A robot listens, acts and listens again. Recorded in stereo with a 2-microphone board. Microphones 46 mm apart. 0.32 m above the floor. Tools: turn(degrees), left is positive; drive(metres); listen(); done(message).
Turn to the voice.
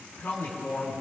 turn(degrees=50)
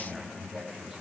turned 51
done("Found it: a man speaking, straight ahead, 2 to 4 m away.")